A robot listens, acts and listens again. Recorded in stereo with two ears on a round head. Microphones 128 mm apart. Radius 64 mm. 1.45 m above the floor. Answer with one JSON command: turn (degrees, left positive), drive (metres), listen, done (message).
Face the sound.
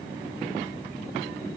{"listen": true}
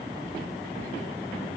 {"listen": true}
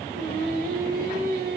{"turn": -70}
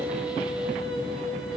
{"done": "Facing the singing, 2 to 4 m away."}